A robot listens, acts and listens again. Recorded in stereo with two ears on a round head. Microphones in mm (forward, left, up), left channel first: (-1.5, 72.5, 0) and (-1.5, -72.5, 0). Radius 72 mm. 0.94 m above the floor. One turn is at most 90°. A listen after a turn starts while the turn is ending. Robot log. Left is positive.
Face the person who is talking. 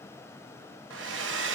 cmd idle
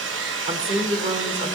note: The woman speaking: about 40° right or 140° right.
cmd yaw -40
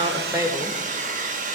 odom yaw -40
cmd idle
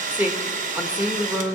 note: So it is at 10° right.
cmd yaw -10
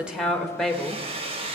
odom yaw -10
end: Facing the woman speaking, 1 to 2 m away.